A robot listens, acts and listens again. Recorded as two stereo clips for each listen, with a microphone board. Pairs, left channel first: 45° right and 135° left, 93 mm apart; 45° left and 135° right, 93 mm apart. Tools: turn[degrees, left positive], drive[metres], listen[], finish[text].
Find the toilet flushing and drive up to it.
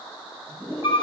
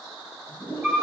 Thought: The toilet flushing: 75° left.
Action: turn[75]
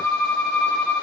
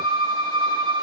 Action: listen[]
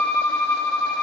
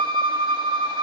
Action: listen[]
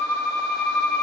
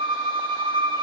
Action: finish[I heard a toilet flushing from this way, but can't make it out now. I did not reach it.]